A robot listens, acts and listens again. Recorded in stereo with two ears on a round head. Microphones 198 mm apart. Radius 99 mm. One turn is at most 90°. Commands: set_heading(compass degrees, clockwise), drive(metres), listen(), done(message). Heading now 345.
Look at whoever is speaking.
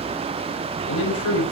set_heading(275)
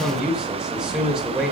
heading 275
done("Found it: a man speaking, straight ahead, over 4 m away.")